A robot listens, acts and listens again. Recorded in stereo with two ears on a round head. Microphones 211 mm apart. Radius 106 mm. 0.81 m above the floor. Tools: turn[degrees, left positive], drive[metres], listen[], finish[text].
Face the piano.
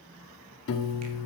Thought: The piano: about 55° left or 125° left.
Action: turn[55]
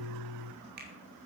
Thought: So it is at 70° left.
Action: turn[70]
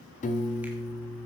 Thought: The piano is now 30° left.
Action: turn[30]
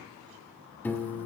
Thought: The piano is now 10° left.
Action: turn[10]
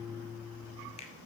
Action: finish[Found it: a piano, straight ahead, 1 to 2 m away.]